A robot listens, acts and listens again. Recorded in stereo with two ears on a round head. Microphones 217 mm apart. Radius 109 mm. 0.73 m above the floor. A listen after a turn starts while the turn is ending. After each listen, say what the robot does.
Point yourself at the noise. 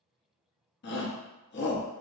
Turn 45° left.
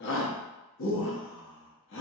Turn 75° left.
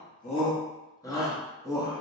Turn 15° left.
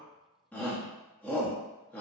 Turn 10° left.
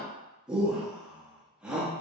Found it: a shout, straight ahead.